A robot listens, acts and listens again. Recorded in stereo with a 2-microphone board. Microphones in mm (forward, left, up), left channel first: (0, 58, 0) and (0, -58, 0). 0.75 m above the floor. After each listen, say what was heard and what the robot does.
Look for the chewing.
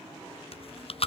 The chewing: about 55° left or 125° left. Turn 55° left.
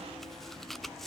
Found it: chewing, straight ahead, under 1 m away.